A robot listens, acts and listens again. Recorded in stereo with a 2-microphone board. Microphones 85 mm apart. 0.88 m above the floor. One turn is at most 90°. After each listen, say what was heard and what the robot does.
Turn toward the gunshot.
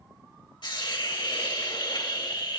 Keep listening.
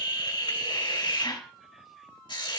Keep listening.
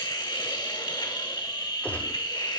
The gunshot: about 20° left or 160° left. Turn 20° left.
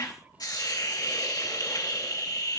Keep listening.
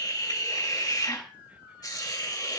I heard a gunshot, but can't make it out now. It was about straight ahead or 140° left.